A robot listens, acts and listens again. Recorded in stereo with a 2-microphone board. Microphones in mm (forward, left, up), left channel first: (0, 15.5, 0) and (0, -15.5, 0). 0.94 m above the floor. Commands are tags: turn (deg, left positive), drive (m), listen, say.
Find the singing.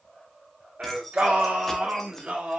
<turn deg="-40"/>
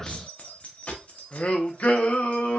<turn deg="70"/>
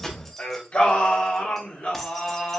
<turn deg="50"/>
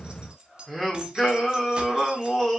<turn deg="10"/>
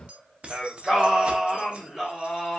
<say>Facing the singing.</say>